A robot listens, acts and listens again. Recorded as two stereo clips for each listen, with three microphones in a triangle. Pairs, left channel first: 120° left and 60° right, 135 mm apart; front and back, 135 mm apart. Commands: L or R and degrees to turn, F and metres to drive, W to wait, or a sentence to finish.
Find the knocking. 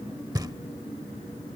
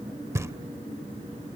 R115
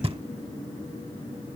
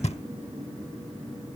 R20
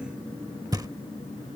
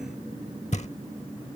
Facing the knocking.